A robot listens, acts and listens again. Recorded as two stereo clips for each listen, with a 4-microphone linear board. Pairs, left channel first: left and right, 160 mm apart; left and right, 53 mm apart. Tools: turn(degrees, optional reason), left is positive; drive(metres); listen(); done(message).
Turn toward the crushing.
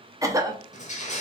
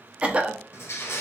turn(degrees=50, reason="The crushing: about 50° left or 130° left.")
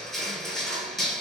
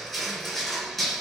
done("Found it: crushing, straight ahead, 1 to 2 m away.")